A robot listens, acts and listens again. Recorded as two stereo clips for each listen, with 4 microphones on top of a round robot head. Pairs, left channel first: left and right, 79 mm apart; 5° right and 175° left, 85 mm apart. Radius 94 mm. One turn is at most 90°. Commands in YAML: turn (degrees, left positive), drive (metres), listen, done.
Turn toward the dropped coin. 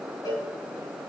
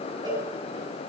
listen: true
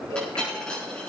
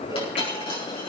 turn: 10
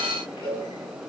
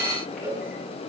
done: "I heard a dropped coin from this way, but can't make it out now."